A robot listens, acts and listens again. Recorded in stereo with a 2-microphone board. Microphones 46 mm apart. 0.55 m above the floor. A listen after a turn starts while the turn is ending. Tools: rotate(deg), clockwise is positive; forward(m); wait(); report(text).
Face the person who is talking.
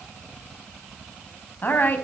rotate(-45)
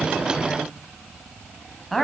report("Found it: a woman speaking, straight ahead.")